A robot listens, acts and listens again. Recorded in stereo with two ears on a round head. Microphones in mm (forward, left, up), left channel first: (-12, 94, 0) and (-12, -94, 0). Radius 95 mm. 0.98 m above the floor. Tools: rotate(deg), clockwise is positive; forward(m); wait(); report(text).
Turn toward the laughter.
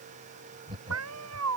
rotate(25)
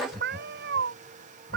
report("Found it: laughter, straight ahead.")